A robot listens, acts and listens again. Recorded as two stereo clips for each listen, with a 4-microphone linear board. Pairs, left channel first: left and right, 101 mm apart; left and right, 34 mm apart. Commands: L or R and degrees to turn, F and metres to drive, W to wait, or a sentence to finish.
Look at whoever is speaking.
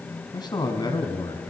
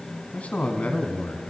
L45
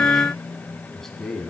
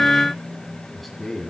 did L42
Facing the man speaking.